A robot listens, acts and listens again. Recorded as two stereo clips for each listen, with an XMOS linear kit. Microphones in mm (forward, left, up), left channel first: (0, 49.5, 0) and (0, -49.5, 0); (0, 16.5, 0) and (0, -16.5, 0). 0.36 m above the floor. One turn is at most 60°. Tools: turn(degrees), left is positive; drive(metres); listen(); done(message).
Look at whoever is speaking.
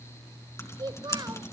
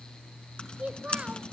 turn(degrees=-40)
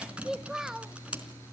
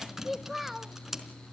done("Facing the child speaking.")